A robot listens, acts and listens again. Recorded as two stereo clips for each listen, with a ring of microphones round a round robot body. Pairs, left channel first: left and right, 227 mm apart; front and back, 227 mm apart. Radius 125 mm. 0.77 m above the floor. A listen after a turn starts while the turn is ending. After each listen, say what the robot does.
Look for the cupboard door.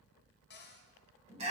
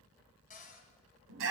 Turn 50° left.
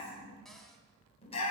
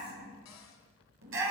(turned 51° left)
Keep listening.
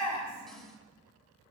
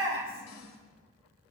Keep listening.
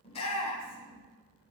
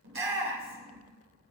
I heard a cupboard door from this way, but can't make it out now.